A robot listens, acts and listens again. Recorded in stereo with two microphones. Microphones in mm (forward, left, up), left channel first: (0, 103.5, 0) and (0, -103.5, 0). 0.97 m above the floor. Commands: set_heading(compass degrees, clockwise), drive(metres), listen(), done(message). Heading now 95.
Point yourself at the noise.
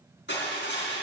set_heading(40)
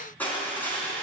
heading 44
set_heading(34)
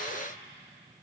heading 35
listen()
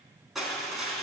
done("Facing the crushing, 2 to 4 m away.")